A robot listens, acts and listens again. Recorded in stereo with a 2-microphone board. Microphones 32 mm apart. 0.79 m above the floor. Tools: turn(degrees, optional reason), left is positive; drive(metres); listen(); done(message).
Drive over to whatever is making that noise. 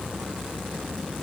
listen()
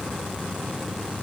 listen()
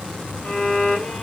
turn(degrees=40, reason="The violin: about 40° left or 140° left.")
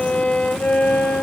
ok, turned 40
turn(degrees=100, reason="So it is at 100° left.")
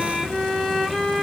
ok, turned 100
drive(metres=1.0)
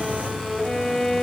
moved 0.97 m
drive(metres=1.0)
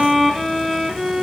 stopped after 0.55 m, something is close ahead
done("Arrived at the violin, straight ahead.")